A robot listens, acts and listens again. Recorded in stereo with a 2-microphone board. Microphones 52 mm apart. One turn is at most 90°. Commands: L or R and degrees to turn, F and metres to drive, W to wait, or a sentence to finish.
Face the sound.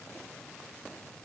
W
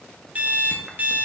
R30
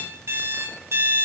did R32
R90
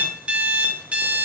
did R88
R25
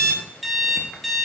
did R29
Found it: an alarm clock, straight ahead, 1 to 2 m away.